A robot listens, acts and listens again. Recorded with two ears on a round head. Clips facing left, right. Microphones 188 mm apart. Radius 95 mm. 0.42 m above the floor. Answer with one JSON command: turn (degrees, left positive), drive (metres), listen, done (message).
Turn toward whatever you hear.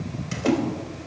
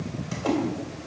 {"turn": 35}
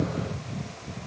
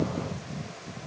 {"listen": true}
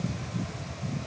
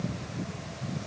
{"done": "I heard a splash, but can't make it out now. It was about straight ahead or 110° left."}